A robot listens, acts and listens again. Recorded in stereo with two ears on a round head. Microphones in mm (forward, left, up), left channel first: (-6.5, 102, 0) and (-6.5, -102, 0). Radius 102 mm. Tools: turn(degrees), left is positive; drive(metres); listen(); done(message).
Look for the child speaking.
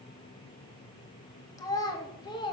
turn(degrees=20)
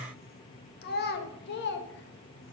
turn(degrees=130)
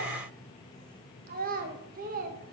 turn(degrees=-40)
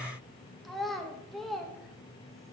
done("Facing the child speaking, 1 to 2 m away.")